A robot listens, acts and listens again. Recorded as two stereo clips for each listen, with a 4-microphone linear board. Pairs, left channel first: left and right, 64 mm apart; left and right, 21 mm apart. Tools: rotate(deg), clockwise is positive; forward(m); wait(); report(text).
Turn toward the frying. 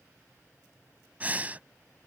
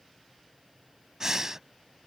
wait()
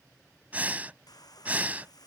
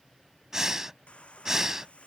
rotate(-90)
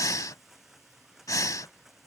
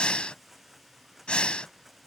report("Facing the frying.")